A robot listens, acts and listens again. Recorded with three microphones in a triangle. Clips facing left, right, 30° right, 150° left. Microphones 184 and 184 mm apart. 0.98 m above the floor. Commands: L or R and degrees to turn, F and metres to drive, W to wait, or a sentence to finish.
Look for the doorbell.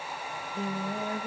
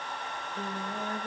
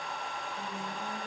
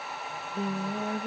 W
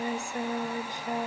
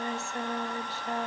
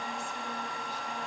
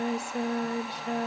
W
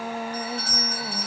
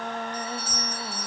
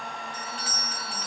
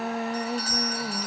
L105
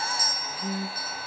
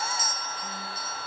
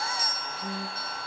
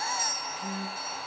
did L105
R25
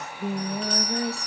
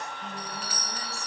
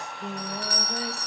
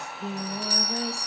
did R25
Found it: a doorbell, straight ahead, 2 to 4 m away.